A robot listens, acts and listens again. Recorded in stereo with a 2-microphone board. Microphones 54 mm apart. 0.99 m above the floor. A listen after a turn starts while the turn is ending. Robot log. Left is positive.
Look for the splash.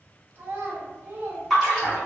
cmd yaw +30
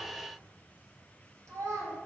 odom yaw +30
cmd idle
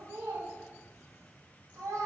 end: I heard a splash, but can't make it out now. It was about 30° right or 150° left.